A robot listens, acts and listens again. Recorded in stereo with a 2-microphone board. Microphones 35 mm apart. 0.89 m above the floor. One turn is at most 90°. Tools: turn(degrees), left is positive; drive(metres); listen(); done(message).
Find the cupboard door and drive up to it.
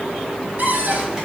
turn(degrees=-65)
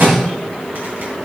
listen()
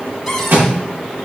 drive(metres=1.0)
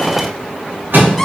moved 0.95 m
drive(metres=1.0)
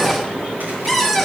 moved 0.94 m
drive(metres=1.0)
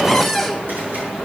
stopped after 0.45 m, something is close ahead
done("Arrived at the cupboard door, straight ahead.")